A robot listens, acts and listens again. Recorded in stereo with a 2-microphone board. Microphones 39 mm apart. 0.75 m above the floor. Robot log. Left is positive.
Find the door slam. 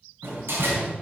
cmd yaw -90
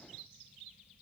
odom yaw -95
end: I heard a door slam from this way, but can't make it out now.